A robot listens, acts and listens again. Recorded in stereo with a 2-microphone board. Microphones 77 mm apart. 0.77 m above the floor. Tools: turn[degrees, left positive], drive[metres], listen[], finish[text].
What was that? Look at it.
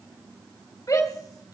Thought: The shout: about 50° left or 130° left.
Action: turn[50]
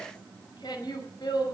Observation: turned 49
Thought: So it is at 75° left.
Action: turn[75]
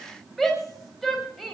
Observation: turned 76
Action: finish[Found it: a shout, straight ahead.]